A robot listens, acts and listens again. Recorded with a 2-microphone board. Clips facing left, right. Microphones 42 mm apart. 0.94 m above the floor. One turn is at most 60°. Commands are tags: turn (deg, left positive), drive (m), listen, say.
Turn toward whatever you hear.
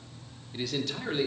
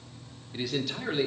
<turn deg="-30"/>
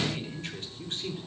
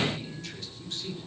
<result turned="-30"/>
<turn deg="35"/>
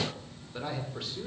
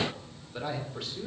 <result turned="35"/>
<say>Found it: a man speaking, straight ahead, 2 to 4 m away.</say>